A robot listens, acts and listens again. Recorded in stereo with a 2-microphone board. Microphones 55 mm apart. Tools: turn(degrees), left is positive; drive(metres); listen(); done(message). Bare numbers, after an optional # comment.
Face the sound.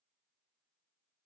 listen()
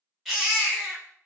turn(-30)
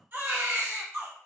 # So it is at 140° right.
turn(-140)
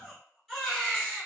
done("Facing the baby crying, 1 to 2 m away.")